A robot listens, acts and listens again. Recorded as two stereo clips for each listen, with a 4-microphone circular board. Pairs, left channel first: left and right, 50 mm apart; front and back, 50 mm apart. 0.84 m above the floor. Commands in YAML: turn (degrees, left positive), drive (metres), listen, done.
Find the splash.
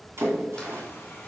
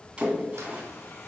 turn: -115
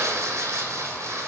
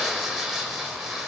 done: "I heard a splash from this way, but can't make it out now."